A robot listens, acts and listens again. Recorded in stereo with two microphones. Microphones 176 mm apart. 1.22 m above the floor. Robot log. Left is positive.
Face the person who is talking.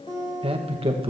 note: The man speaking: about 30° right or 150° right.
cmd yaw -30
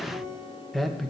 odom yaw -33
end: Facing the man speaking.